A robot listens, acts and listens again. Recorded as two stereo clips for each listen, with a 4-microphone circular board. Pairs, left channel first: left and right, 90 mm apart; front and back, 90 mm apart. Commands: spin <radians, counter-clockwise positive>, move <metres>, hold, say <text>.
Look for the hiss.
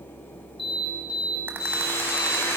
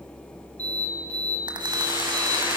spin 2.62
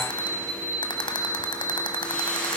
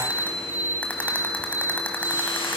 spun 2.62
spin 0.26
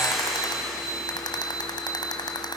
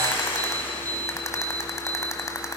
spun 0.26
say Found it: a hiss, straight ahead, over 4 m away.